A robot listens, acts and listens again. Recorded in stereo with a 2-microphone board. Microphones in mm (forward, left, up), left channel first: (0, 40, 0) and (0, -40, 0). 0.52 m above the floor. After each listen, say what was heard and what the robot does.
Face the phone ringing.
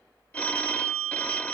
The phone ringing: about 20° left or 160° left. Turn 20° left.
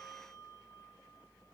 Keep listening.
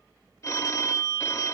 So it is at 140° left. Turn 140° left.
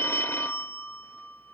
The phone ringing is now 35° left. Turn 35° left.
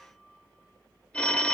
The phone ringing is now 15° left. Turn 15° left.
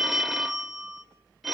Found it: a phone ringing, straight ahead, under 1 m away.